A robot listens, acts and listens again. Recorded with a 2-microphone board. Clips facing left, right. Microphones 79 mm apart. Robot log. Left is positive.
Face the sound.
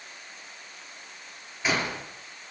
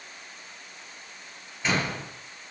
cmd yaw +30
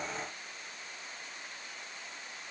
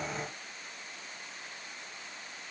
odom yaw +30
cmd idle
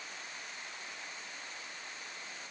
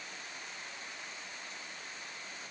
end: I heard a door slam, but can't make it out now. It was about 20° right or 140° left.